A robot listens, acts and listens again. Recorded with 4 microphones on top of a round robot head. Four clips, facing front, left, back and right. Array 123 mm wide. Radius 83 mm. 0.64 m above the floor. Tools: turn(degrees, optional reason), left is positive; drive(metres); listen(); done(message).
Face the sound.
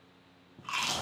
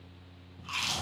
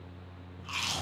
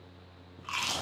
turn(degrees=-35, reason="The chewing: 35° right.")
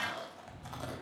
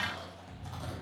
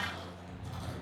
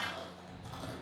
done("Facing the chewing.")